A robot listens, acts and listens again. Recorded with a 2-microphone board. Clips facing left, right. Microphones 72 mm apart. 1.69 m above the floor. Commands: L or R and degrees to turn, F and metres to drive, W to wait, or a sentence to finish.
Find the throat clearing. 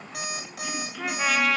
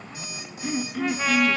R45
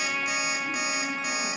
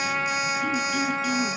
W
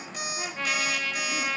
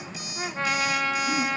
W
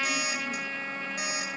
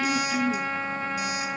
R90
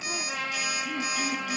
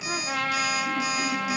W
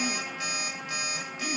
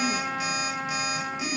R20
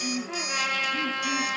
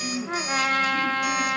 Facing the throat clearing.